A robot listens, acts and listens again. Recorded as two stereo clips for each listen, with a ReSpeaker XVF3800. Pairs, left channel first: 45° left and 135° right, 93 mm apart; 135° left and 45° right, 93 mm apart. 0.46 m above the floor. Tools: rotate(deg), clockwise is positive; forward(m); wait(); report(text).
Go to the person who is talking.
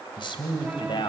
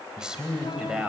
rotate(-35)
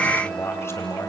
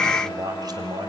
rotate(15)
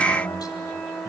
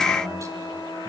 forward(1.0)
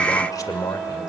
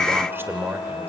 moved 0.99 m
rotate(-10)
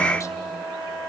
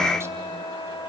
wait()
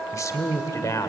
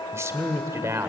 forward(1.0)
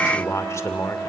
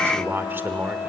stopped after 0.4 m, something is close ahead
report("Arrived at the man speaking, straight ahead.")